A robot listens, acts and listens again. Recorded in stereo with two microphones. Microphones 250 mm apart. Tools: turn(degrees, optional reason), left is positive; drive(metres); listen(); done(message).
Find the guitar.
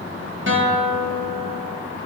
turn(degrees=-50, reason="The guitar: about 50° right or 130° right.")
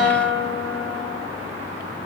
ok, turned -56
done("Found it: a guitar, straight ahead.")